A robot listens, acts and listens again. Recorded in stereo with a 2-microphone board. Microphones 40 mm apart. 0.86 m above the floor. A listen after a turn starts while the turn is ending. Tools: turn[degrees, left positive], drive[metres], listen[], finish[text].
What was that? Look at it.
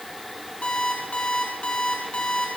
Thought: The alarm clock: about 30° left or 150° left.
Action: turn[30]
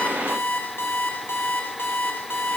Thought: So it is at 115° left.
Action: turn[115]
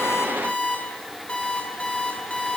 Thought: The alarm clock is now 30° left.
Action: turn[30]
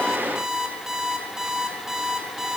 Thought: The alarm clock is now 10° right.
Action: turn[-10]
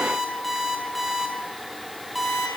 Action: finish[Facing the alarm clock, over 4 m away.]